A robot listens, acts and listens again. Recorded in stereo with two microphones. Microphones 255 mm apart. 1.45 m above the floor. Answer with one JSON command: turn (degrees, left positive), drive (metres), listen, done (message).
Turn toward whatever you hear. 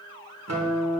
{"turn": -90}
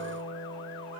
{"turn": 10}
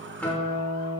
{"done": "Facing the guitar, 1 to 2 m away."}